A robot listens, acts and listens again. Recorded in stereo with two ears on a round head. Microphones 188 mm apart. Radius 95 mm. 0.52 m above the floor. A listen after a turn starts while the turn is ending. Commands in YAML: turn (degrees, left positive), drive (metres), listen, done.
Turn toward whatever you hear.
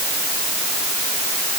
listen: true
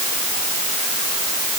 listen: true
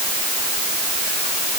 done: "I can't make out anything."